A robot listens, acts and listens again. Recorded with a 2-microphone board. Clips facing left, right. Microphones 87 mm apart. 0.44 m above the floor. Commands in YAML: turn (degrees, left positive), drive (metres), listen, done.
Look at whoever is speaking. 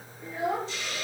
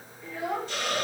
turn: 20
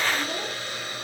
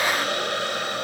listen: true
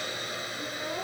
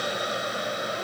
listen: true
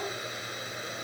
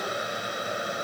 done: "I heard a child speaking, but can't make it out now. It was about straight ahead or 140° left."